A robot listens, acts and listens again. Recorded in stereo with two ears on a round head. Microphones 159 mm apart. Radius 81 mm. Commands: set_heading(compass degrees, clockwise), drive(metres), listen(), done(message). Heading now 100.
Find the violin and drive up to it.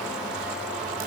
listen()
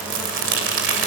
listen()
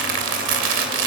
done("I can't make out a violin to turn to.")